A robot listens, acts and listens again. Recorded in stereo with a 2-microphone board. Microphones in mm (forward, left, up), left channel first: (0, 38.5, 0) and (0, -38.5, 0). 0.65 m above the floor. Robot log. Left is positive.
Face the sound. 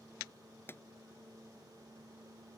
note: The pop: about 30° left or 150° left.
cmd yaw +30
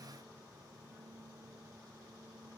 cmd idle
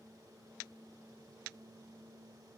end: I heard a pop, but can't make it out now. It was about straight ahead or 120° left.